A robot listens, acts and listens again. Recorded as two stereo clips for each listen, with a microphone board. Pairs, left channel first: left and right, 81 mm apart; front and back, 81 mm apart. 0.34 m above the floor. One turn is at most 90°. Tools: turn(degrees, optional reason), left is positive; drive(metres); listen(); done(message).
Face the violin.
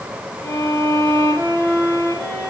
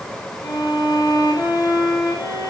turn(degrees=40, reason="The violin: 40° left.")
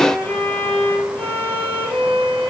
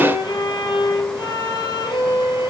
turn(degrees=20, reason="The violin is now 20° left.")
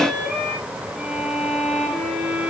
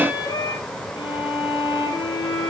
done("Facing the violin, 2 to 4 m away.")